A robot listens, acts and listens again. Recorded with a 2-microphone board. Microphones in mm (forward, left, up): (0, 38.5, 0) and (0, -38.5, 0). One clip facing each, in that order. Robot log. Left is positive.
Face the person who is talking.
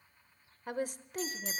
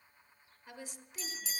note: The woman speaking: about 55° left or 125° left.
cmd yaw +55
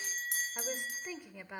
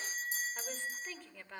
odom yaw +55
note: So it is at 20° left.
cmd yaw +20
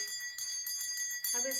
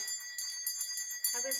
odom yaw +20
end: Found it: a woman speaking, straight ahead, 1 to 2 m away.